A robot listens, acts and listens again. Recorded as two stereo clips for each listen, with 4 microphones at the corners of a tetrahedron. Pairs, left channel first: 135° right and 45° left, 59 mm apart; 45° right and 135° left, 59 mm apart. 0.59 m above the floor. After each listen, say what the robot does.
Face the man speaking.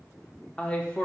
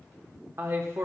Turn 165° left.
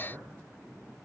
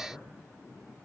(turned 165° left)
Turn 20° left.
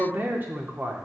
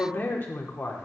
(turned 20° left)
Facing the man speaking, 1 to 2 m away.